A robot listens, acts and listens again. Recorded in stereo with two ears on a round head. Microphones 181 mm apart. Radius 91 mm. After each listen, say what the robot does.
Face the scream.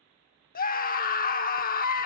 Turn 45° left.
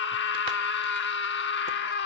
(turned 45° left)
Turn 80° left.
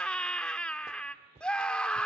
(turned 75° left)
Found it: a scream, straight ahead.